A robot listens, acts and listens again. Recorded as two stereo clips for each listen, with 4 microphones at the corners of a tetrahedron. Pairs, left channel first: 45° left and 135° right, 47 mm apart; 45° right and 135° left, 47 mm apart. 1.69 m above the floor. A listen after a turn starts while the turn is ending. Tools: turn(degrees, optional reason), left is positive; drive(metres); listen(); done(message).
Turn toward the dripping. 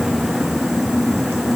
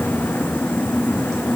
listen()
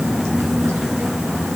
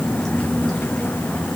listen()
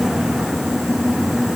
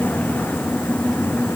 done("I can't make out dripping to turn to.")